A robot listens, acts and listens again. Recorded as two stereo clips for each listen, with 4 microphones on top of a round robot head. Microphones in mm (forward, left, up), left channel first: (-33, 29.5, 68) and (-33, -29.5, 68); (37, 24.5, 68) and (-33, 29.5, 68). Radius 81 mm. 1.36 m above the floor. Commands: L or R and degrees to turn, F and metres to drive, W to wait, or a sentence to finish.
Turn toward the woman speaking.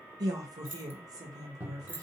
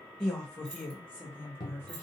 R70
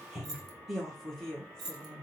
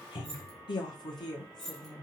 L20
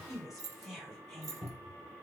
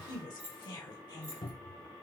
Found it: a woman speaking, straight ahead.